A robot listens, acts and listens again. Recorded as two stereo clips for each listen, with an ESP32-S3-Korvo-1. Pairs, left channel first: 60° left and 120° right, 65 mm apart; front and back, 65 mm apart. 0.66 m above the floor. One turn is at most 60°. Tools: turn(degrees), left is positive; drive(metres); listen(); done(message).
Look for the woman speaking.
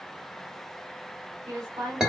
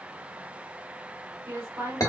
turn(degrees=-60)
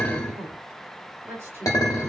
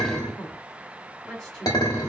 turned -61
turn(degrees=-60)
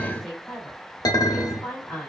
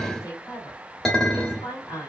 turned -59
turn(degrees=-25)
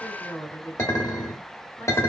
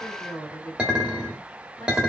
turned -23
done("Found it: a woman speaking, straight ahead, 2 to 4 m away.")